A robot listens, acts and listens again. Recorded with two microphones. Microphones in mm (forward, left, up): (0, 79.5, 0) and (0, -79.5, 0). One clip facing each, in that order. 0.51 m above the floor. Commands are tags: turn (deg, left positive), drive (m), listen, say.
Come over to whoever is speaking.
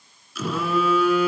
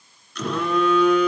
<listen/>
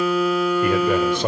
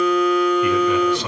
<turn deg="55"/>
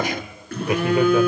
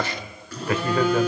<turn deg="15"/>
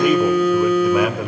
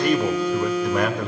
<drive m="1.0"/>
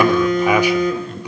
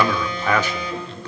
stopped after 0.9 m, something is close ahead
<turn deg="20"/>
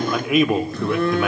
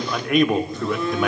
<say>Arrived at the man speaking, straight ahead.</say>